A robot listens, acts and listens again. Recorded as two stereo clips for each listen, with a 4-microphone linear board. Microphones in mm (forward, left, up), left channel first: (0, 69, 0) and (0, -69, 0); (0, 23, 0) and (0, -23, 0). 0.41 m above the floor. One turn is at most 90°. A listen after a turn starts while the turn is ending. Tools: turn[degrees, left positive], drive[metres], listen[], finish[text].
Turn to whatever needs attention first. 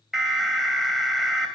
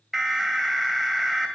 Action: turn[-30]
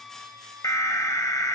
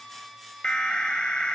Thought: So it is at 25° left.
Action: turn[25]
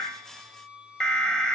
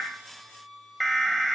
Action: finish[Facing the alarm, 2 to 4 m away.]